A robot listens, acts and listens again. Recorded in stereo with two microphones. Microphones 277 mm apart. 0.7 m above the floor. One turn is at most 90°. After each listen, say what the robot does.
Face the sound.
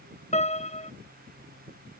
Turn 25° left.
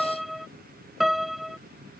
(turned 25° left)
Facing the piano.